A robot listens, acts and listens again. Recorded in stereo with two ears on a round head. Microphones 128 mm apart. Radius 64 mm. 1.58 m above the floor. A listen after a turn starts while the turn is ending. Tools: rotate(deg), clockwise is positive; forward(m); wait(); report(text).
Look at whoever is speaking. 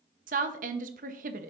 rotate(60)
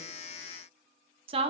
rotate(45)
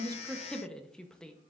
report("Facing the woman speaking.")